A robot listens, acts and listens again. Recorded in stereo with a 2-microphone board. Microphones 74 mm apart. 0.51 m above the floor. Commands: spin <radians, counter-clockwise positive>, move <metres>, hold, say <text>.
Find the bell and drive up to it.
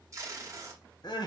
hold
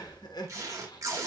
hold
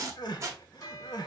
spin 0.79
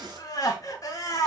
hold
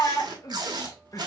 hold
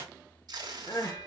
move 1.0
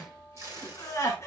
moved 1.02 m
move 1.0
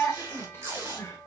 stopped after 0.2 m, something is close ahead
say I am next to the bell.